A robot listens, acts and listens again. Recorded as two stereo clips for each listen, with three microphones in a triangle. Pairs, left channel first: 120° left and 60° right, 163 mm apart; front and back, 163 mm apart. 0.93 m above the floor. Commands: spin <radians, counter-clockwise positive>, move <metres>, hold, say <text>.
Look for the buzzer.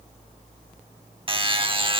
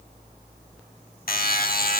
say Facing the buzzer.